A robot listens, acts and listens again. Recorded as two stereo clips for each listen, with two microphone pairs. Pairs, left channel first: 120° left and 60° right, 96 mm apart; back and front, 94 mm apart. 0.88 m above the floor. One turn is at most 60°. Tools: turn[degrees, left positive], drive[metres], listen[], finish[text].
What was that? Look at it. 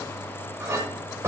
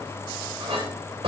Action: finish[Found it: a clink, straight ahead, 2 to 4 m away.]